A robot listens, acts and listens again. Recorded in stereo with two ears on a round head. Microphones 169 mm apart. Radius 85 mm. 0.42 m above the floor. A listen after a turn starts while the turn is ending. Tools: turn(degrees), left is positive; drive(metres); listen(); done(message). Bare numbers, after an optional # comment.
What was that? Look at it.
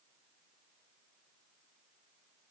listen()
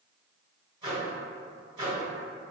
# The microwave: about 30° right or 150° right.
turn(-30)
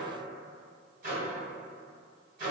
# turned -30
# So it is at 115° right.
turn(-115)
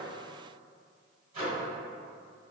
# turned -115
# The microwave is now 45° right.
turn(-45)
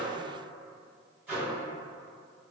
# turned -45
# The microwave is now 10° right.
turn(-10)
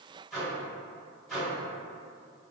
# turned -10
done("Found it: a microwave, straight ahead, 1 to 2 m away.")